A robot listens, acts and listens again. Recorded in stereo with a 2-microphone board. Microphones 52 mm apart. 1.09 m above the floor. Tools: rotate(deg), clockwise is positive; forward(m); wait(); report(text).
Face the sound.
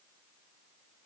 wait()
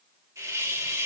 rotate(90)
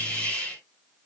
rotate(-15)
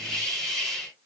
report("Found it: a hiss, straight ahead, 2 to 4 m away.")